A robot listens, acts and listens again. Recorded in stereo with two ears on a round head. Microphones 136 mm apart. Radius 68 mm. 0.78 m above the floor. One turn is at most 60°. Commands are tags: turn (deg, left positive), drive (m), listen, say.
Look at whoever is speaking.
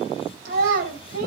<turn deg="-60"/>
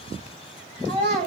<turn deg="-45"/>
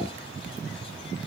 <listen/>
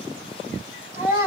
<turn deg="-20"/>
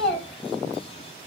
<say>Found it: a child speaking, straight ahead, 2 to 4 m away.</say>